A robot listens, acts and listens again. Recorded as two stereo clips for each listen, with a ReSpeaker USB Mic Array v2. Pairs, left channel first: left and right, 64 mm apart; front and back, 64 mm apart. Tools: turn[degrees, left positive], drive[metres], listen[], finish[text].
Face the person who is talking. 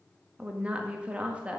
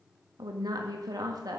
Thought: The woman speaking: 165° right.
Action: turn[-165]
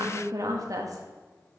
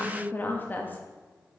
Thought: The woman speaking is now 60° right.
Action: turn[-60]
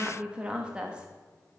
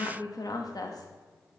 Thought: The woman speaking is now 15° right.
Action: turn[-15]
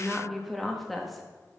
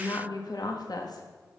Action: finish[Found it: a woman speaking, straight ahead, 1 to 2 m away.]